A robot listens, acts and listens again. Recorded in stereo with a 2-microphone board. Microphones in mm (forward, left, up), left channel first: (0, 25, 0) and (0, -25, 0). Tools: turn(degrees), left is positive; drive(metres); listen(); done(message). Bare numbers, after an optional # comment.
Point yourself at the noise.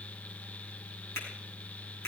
# The finger snap: about 65° left or 115° left.
turn(65)
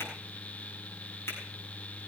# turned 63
listen()
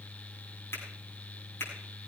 # So it is at 55° left.
turn(55)
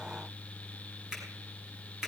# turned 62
# The finger snap is now 10° right.
turn(-10)
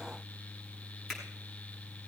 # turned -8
listen()
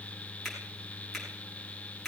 done("Facing the finger snap.")